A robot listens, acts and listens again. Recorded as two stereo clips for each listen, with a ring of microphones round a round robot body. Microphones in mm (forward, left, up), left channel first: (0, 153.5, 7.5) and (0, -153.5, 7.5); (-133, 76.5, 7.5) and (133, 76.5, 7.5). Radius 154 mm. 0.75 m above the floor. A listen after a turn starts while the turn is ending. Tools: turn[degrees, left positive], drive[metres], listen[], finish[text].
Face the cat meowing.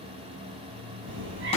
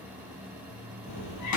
Thought: The cat meowing: 145° right.
Action: turn[-145]
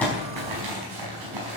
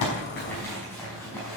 Action: listen[]
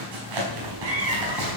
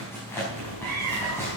Thought: The cat meowing is now 40° right.
Action: turn[-40]
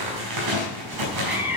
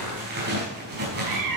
Action: finish[Found it: a cat meowing, straight ahead.]